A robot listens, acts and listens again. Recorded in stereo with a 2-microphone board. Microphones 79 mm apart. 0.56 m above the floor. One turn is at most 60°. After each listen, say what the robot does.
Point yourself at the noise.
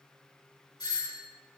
Turn 50° left.
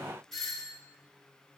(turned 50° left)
Found it: a doorbell, straight ahead, 2 to 4 m away.